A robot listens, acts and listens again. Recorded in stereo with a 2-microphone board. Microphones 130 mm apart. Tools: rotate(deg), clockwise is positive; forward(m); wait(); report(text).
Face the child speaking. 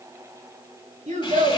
rotate(70)
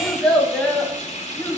rotate(-10)
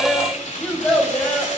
rotate(-10)
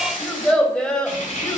report("Facing the child speaking.")